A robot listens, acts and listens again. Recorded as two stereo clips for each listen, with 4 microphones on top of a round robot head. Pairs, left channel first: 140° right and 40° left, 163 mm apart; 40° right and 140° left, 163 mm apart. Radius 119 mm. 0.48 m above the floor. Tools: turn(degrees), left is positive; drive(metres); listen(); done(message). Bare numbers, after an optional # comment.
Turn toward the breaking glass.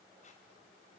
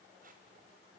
listen()
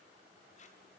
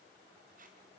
listen()
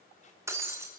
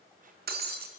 # The breaking glass: 115° left.
turn(115)
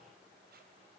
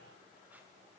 done("I heard breaking glass from this way, but can't make it out now.")